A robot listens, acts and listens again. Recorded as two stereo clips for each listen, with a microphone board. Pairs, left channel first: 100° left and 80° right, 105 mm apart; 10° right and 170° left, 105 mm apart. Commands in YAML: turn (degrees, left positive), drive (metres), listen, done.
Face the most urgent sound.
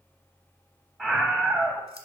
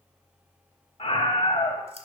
done: "Facing the scream."